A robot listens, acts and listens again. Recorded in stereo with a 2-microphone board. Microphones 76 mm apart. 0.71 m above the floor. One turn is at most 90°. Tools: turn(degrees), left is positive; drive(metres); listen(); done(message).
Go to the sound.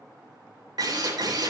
turn(degrees=-65)
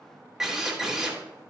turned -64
drive(metres=1.0)
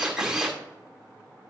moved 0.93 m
turn(degrees=-10)
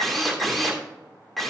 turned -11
drive(metres=1.0)
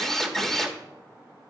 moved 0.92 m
turn(degrees=10)
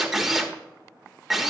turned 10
drive(metres=1.0)
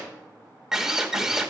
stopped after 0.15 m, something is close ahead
done("Arrived at the drill, straight ahead.")